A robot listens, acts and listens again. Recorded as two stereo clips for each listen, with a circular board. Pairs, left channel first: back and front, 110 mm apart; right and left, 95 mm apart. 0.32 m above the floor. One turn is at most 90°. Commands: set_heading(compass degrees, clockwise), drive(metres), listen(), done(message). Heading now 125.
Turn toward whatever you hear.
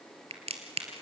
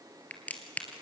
set_heading(140)
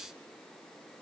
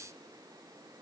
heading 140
done("I heard a crack from this way, but can't make it out now.")